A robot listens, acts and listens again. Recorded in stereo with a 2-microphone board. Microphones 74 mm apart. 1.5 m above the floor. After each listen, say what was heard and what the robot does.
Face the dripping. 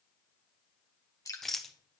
The dripping: about 50° left or 130° left. Turn 50° left.
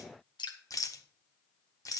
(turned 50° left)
So it is at 80° left. Turn 80° left.
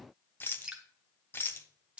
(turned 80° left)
The dripping is now 15° right. Turn 15° right.
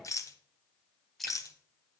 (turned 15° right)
Found it: dripping, straight ahead, 1 to 2 m away.